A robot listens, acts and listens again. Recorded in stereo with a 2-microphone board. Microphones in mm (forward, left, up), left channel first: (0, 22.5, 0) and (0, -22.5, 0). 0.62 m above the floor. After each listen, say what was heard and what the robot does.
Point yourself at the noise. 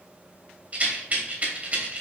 The rattle: about 35° right or 145° right. Turn 35° right.
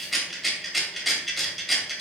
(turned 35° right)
Found it: a rattle, straight ahead.